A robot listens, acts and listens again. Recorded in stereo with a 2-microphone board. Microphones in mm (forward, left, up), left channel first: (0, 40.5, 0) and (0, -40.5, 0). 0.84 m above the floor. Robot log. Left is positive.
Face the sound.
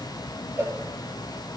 note: The cowbell: about 30° right or 150° right.
cmd yaw -30
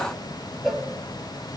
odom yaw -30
end: Found it: a cowbell, straight ahead, 1 to 2 m away.